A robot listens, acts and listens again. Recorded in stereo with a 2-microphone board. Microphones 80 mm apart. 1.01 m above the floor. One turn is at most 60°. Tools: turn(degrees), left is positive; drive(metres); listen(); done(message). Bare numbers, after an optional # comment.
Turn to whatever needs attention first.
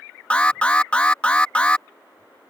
# The alarm: about 15° left or 165° left.
turn(15)
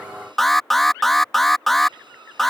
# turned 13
done("Found it: an alarm, straight ahead.")